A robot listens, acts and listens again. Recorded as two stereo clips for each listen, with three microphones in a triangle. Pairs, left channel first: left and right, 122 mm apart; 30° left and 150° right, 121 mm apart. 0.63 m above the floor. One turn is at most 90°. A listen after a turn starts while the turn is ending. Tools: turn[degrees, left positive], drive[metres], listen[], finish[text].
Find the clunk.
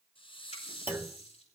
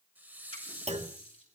Thought: The clunk: 165° right.
Action: turn[-90]
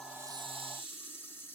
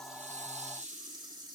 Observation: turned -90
Thought: Nothing new. It was at 75° right.
Action: turn[-75]
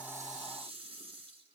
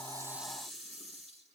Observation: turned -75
Action: finish[I heard a clunk from this way, but can't make it out now.]